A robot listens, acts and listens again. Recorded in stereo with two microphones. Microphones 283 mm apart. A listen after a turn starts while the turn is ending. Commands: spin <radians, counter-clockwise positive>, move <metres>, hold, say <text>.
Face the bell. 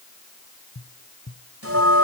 spin -0.87
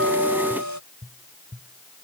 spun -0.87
spin -1.31
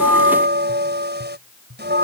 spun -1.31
spin -0.61
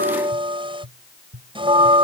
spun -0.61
spin -0.35
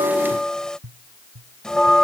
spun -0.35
say Found it: a bell, straight ahead.